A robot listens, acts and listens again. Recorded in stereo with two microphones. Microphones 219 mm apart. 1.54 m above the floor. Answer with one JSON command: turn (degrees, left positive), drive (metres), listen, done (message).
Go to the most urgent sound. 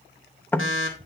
{"turn": 90}
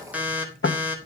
{"drive": 1.0}
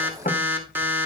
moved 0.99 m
{"turn": -10}
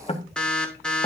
{"drive": 1.0}
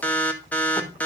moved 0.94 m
{"turn": 10}
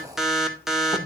{"drive": 1.0}
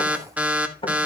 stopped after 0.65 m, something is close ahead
{"turn": -10}
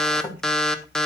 {"done": "I am next to the alarm."}